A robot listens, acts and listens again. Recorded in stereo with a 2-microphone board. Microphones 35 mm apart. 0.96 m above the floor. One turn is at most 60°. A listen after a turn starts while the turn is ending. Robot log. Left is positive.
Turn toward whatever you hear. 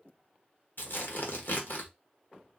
note: The tearing paper: about 60° left or 120° left.
cmd yaw +60
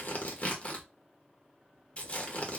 note: So it is at 40° left.
cmd yaw +40
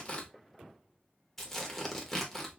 note: The tearing paper is now 10° left.
cmd yaw +10
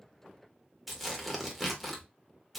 end: Facing the tearing paper, 1 to 2 m away.